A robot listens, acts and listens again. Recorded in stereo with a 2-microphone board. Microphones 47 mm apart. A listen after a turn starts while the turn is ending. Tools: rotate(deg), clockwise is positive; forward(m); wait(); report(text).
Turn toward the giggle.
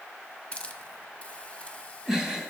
rotate(30)
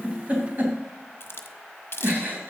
rotate(140)
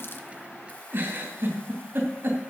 rotate(50)
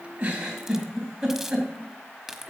rotate(10)
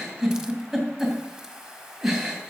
report("Facing the giggle.")